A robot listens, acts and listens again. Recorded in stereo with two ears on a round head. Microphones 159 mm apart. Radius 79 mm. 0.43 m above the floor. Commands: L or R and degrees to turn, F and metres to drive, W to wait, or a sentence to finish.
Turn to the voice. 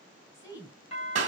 L20
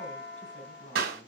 L135
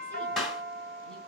W
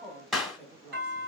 Found it: a woman speaking, straight ahead.